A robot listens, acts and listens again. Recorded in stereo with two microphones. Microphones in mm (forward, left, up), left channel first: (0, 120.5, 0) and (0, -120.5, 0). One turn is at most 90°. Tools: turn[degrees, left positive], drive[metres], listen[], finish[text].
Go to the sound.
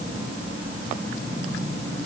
Action: listen[]
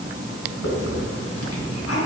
Action: listen[]
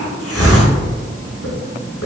Action: turn[90]
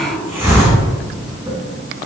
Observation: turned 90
Thought: So it is at 10° right.
Action: turn[-10]
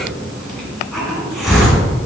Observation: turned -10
Action: drive[1.0]
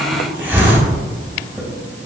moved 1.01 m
Thought: The hiss is now 10° right.
Action: turn[-10]
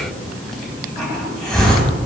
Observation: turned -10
Action: drive[1.0]
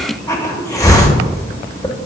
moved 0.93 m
Thought: The hiss is now 15° left.
Action: turn[15]
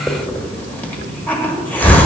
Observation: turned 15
Action: drive[1.0]
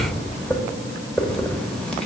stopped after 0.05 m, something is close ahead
Action: finish[I am next to the hiss.]